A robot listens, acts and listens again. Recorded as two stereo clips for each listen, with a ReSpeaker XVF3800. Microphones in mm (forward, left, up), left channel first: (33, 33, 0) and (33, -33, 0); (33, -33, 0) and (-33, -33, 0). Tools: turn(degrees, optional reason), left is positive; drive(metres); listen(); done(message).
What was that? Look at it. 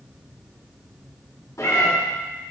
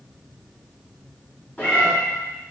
turn(degrees=65, reason="The cat meowing: 65° left.")
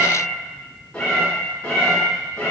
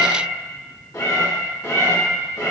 turn(degrees=25, reason="The cat meowing is now 25° left.")
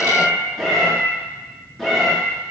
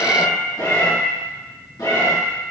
done("Facing the cat meowing, 2 to 4 m away.")